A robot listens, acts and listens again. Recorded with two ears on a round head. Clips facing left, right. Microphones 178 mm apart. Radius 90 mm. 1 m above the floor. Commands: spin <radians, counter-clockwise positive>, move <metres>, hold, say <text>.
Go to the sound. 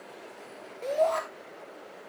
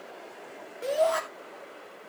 spin -0.52
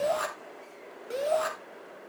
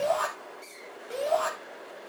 spin 0.44
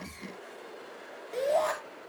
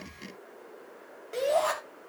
move 1.0
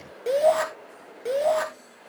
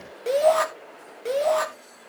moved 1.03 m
move 1.0
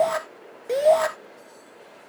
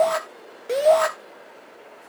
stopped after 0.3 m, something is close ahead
say I am next to the shout.